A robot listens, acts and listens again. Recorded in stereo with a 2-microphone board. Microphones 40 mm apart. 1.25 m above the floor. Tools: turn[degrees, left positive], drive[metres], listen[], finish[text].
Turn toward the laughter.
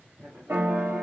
Thought: The laughter: about 20° right or 160° right.
Action: turn[-20]
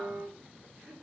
Thought: So it is at 135° right.
Action: turn[-135]
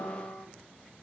Action: listen[]
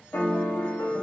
Action: listen[]
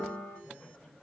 Thought: The laughter is now 35° left.
Action: turn[35]
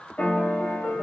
Action: listen[]
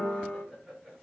Action: finish[Found it: laughter, straight ahead.]